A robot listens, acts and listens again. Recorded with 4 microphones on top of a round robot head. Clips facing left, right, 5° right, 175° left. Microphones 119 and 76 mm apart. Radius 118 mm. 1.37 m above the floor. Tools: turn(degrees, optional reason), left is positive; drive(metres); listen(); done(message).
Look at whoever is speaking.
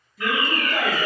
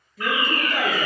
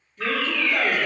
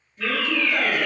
turn(degrees=-105, reason="The woman speaking: 105° right.")
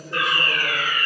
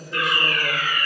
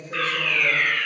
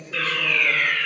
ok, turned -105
listen()
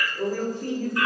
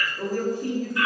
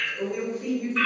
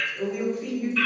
turn(degrees=-15, reason="The woman speaking is now 15° right.")
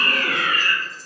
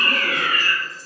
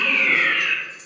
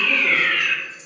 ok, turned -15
listen()
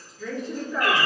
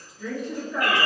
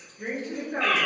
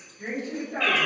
turn(degrees=-10, reason="The woman speaking is now 10° right.")
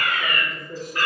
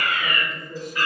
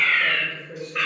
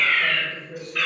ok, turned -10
done("Facing the woman speaking, 1 to 2 m away.")